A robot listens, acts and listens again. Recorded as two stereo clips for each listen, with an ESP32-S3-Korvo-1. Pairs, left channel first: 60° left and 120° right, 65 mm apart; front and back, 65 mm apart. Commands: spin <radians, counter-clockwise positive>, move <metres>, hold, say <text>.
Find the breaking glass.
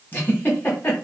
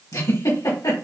hold
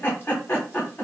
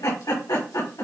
hold
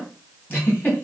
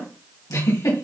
say I can't make out breaking glass to turn to.